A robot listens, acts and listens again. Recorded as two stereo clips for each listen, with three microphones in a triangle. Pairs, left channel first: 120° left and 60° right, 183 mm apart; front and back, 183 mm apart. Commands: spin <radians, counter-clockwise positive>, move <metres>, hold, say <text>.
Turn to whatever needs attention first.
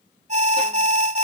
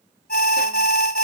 spin -0.44
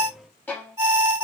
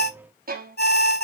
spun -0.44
say Found it: an alarm, straight ahead.